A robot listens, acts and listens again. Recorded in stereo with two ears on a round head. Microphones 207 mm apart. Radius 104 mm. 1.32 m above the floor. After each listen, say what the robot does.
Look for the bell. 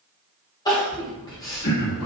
Turn 70° left.
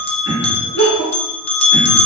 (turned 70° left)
Turn 25° left.
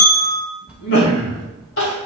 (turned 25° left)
Facing the bell.